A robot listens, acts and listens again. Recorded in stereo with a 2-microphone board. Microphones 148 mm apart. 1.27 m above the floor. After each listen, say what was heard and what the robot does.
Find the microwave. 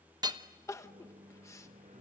The microwave: about 60° right or 120° right. Turn 60° right.
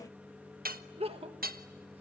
Facing the microwave, under 1 m away.